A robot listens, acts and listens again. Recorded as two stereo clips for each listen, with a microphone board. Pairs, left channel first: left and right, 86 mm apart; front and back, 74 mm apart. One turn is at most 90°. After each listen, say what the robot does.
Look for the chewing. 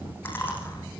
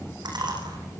Turn 90° left.
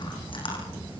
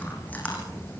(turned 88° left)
Turn 70° left.
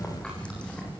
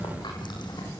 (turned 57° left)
Turn 15° left.
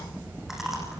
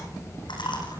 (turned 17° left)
Facing the chewing, over 4 m away.